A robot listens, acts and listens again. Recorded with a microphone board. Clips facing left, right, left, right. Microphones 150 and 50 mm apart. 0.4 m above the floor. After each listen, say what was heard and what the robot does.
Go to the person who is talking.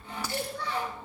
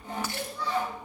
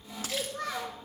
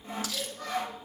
The child speaking: about 70° left or 110° left. Turn 70° left.
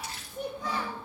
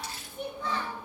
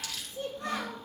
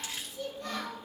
So it is at 45° left. Turn 45° left.
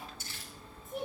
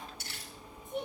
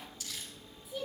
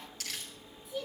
Drive 1.0 m forward.
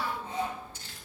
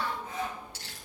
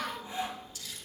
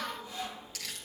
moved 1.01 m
Drive 1.0 m forward.
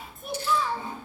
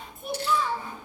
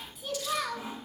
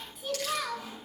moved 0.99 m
Drive 1.0 m forward.
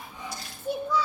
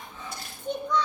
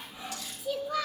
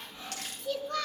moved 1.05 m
Drive 1.0 m forward.
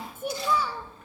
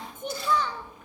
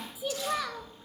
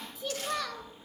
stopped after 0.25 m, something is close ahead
The child speaking is now 10° left. Turn 10° left.
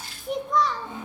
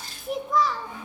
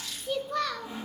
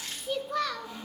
I am next to the child speaking.